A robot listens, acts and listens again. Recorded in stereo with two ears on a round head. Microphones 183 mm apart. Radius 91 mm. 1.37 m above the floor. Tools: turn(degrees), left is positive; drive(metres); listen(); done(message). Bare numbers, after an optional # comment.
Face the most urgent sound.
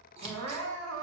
turn(-90)
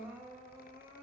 # So it is at 10° right.
turn(-10)
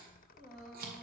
done("Found it: crying, straight ahead.")